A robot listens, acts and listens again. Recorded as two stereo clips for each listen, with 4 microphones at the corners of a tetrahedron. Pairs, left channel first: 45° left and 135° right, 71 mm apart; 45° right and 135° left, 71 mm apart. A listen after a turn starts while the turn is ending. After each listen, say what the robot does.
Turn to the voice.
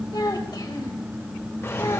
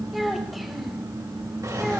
Turn 45° left.
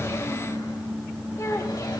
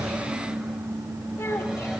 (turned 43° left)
Keep listening.
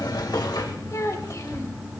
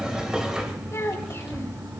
Found it: a child speaking, straight ahead.